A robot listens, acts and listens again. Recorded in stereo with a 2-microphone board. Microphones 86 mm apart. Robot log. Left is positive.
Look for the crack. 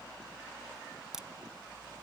cmd yaw -30
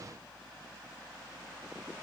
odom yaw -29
cmd idle
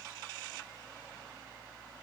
end: I heard a crack, but can't make it out now. It was about 25° left or 145° right.